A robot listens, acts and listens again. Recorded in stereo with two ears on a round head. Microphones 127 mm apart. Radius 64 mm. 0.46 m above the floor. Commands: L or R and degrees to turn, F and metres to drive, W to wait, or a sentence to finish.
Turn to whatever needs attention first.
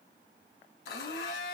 W
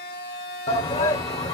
L40
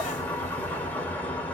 W
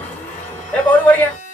L15
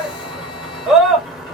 Found it: a shout, straight ahead.